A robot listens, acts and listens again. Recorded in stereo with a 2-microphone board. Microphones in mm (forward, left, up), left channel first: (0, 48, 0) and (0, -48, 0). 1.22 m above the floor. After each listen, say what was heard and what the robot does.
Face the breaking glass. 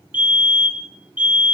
Keep listening.
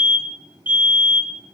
Keep listening.
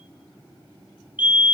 I can't make out breaking glass, only a fire alarm.